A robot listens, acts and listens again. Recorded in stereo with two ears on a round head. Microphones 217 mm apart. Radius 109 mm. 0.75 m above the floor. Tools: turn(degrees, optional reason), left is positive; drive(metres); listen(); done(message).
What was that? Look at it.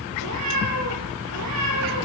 turn(degrees=-65, reason="The cat meowing: about 65° right or 115° right.")
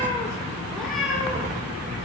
done("Found it: a cat meowing, straight ahead, over 4 m away.")